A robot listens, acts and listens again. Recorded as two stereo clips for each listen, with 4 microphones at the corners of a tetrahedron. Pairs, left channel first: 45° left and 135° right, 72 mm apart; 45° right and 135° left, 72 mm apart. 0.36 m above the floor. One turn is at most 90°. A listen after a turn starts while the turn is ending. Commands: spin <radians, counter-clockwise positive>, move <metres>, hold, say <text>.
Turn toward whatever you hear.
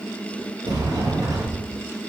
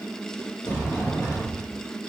spin -1.57
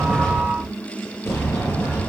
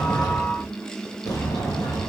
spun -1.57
spin -0.17
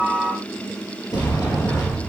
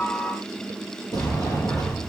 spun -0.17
say Found it: a sliding door, straight ahead, over 4 m away.